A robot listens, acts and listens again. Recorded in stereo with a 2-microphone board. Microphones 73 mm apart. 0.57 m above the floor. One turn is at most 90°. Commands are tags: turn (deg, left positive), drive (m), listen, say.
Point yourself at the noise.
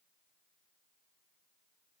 <listen/>
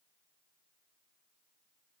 <listen/>
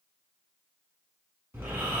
<turn deg="-30"/>
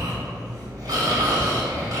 <turn deg="-90"/>
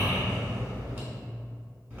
<turn deg="-20"/>
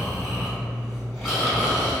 <say>Found it: snoring, straight ahead.</say>